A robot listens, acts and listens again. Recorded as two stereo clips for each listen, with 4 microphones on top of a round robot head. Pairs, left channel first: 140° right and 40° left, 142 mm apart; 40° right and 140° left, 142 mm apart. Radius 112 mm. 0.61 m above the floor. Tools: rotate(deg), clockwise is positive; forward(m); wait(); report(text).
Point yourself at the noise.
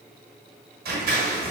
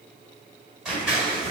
rotate(-55)
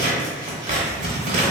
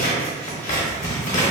report("Facing the scissors.")